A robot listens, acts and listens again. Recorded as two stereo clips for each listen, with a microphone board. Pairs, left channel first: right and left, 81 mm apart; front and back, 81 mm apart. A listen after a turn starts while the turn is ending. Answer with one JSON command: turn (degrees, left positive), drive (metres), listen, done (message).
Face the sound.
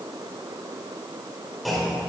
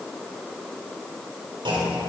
{"turn": 180}
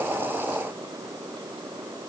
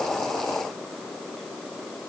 {"done": "Facing where the clunk came from. I can't hear it now."}